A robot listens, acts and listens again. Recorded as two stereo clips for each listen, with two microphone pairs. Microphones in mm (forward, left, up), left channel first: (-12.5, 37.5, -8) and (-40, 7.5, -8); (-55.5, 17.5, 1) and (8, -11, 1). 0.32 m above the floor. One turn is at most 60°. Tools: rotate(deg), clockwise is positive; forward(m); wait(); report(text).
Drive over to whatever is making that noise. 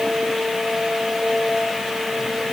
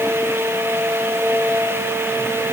wait()
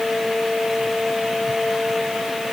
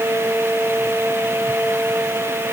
wait()
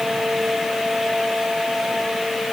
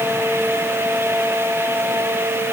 report("I can't make out anything.")